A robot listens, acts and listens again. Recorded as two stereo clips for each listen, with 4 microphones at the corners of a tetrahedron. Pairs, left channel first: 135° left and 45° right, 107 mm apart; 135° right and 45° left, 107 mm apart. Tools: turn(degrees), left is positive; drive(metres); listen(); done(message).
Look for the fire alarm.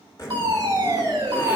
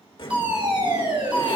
done("Facing the fire alarm.")